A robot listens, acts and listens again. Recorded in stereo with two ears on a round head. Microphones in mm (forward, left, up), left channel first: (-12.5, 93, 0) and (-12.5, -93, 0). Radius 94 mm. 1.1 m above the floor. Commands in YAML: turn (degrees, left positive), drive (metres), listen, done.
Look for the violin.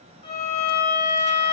turn: 30
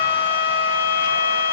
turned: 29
turn: 120
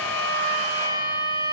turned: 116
done: "Facing the violin."